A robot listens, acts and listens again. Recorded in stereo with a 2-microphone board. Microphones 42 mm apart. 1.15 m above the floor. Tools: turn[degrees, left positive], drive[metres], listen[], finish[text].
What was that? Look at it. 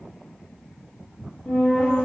Thought: The flute: about 30° left or 150° left.
Action: turn[30]
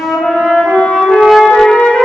Thought: So it is at 115° left.
Action: turn[115]
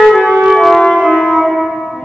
Thought: The flute is now 20° right.
Action: turn[-20]
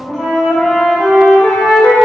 Action: finish[Facing the flute, under 1 m away.]